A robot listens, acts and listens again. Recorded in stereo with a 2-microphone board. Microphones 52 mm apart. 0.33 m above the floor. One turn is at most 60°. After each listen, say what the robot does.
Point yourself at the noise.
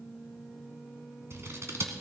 Turn 60° right.
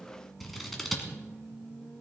Found it: scissors, straight ahead, 2 to 4 m away.